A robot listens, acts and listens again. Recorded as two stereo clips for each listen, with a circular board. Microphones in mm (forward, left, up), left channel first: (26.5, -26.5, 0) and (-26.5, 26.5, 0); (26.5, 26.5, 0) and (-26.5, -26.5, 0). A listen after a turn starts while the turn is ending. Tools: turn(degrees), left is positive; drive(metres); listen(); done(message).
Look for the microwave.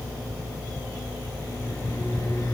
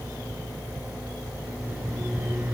turn(degrees=-70)
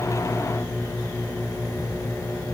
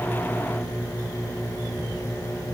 done("Facing the microwave, over 4 m away.")